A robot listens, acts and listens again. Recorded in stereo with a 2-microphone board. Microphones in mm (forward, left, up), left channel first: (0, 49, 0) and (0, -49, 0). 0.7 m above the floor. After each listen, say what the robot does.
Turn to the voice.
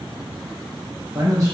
Turn 30° right.
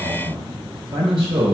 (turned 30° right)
Turn 115° right.
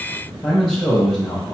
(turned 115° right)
Facing the man speaking, 2 to 4 m away.